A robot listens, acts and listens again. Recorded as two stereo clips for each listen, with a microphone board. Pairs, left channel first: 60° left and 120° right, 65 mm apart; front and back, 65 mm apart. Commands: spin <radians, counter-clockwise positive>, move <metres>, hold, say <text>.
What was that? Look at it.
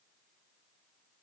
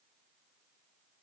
hold
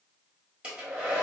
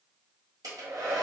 spin 2.97
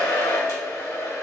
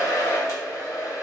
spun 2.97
spin 0.52
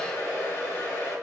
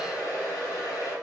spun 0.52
spin 0.26
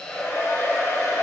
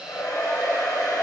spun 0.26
say Found it: a hair dryer, straight ahead.